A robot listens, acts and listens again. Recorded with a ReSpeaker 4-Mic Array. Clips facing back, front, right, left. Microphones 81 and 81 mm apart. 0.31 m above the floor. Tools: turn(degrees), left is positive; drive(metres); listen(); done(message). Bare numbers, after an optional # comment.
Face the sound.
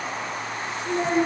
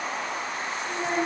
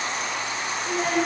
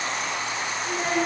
# The child speaking: 175° right.
turn(-175)
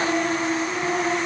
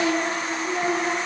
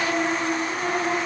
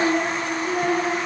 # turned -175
# The child speaking is now 60° left.
turn(60)
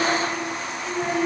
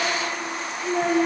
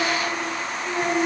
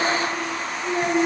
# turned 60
# The child speaking is now 15° left.
turn(15)
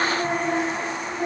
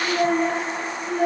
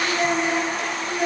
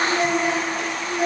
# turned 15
done("Facing the child speaking, over 4 m away.")